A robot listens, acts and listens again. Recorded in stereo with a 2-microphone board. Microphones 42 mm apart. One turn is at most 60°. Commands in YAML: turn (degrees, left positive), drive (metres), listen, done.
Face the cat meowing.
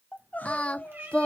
turn: -55
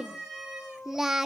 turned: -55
turn: -10
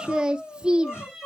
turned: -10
done: "Found it: a cat meowing, straight ahead, over 4 m away."